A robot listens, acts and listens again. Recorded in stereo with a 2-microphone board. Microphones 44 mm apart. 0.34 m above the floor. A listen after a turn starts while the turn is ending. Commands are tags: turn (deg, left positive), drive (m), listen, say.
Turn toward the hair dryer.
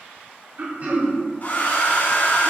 <turn deg="45"/>
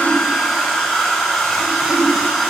<say>Found it: a hair dryer, straight ahead.</say>